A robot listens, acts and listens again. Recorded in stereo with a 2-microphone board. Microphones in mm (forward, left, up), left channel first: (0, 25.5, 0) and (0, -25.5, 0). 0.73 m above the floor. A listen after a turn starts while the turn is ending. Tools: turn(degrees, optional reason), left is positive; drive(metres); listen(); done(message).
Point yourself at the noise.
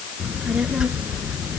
turn(degrees=-20, reason="The child speaking: about 20° right or 160° right.")
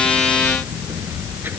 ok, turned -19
turn(degrees=-135, reason="So it is at 135° right.")
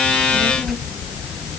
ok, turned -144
turn(degrees=10, reason="The child speaking is now 10° left.")
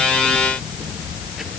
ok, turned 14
done("Found it: a child speaking, straight ahead.")